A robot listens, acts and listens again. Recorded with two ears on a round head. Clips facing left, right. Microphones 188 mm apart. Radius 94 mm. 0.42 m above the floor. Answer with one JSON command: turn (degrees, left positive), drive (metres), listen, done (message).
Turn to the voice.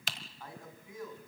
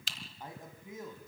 {"turn": -20}
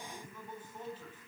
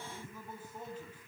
{"turn": -30}
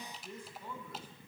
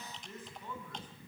{"turn": 10}
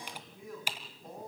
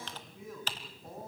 {"done": "Found it: a man speaking, straight ahead, over 4 m away."}